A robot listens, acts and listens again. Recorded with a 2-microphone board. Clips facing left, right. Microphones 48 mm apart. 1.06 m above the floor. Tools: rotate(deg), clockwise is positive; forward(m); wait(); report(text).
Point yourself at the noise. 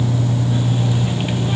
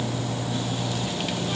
wait()
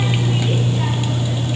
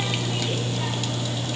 wait()
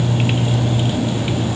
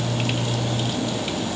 report("I can't make out anything to turn to.")